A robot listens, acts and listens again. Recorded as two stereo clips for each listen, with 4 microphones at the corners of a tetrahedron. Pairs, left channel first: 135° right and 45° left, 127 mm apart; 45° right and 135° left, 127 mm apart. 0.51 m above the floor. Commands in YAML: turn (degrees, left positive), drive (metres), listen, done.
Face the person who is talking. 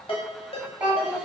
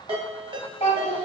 turn: -35
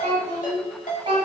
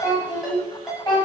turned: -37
done: "Found it: a child speaking, straight ahead."